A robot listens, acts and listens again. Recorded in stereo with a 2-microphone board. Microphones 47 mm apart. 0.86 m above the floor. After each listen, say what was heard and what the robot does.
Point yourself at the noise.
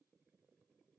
Keep listening.
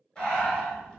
The breathing: about 20° left or 160° left. Turn 20° left.
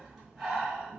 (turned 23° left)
Facing the breathing.